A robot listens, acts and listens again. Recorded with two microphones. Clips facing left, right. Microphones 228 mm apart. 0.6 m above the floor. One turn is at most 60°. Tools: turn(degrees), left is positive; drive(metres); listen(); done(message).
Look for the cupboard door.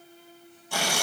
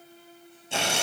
listen()
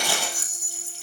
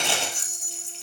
listen()
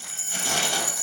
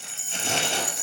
done("I can't make out a cupboard door, only tearing paper and a rattle.")